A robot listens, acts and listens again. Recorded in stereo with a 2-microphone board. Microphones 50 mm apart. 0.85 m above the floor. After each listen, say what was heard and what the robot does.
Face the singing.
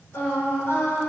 The singing: about 55° left or 125° left. Turn 55° left.
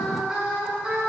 So it is at 15° right. Turn 15° right.
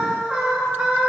The singing is now 15° right. Turn 15° right.
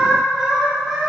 Found it: singing, straight ahead, 2 to 4 m away.